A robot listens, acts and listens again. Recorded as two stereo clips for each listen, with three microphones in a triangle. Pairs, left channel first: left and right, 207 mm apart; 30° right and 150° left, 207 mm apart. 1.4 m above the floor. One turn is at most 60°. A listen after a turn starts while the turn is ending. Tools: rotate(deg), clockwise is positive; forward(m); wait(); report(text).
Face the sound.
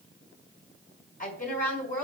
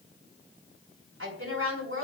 rotate(-60)
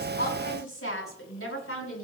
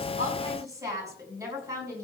rotate(-60)
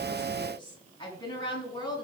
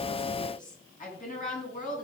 rotate(-20)
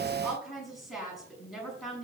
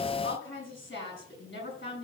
report("Found it: a woman speaking, straight ahead, over 4 m away.")